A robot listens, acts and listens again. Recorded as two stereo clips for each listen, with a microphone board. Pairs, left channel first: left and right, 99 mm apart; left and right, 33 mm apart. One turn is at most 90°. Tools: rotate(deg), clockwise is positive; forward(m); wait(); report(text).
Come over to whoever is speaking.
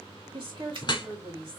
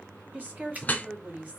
rotate(55)
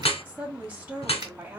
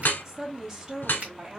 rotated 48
rotate(20)
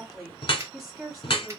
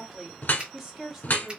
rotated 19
forward(1.0)
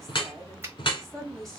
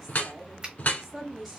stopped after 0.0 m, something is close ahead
report("Something is in my way. I am facing the woman speaking but have not reached it.")